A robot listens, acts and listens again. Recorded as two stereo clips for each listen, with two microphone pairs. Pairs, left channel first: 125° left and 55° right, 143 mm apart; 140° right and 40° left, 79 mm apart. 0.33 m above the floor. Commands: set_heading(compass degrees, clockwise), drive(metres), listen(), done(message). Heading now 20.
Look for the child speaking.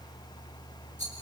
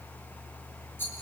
listen()
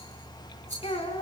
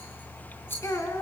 set_heading(205)
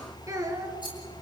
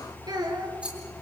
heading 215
set_heading(200)
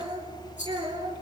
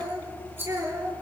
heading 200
done("Facing the child speaking, over 4 m away.")